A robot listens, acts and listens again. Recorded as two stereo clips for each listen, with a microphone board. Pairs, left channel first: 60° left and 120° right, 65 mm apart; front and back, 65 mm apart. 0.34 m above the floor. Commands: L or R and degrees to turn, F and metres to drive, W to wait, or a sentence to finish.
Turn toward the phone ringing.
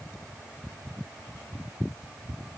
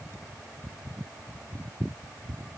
W
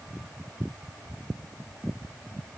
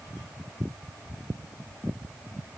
W
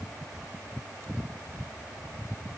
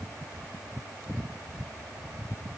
I can't make out a phone ringing.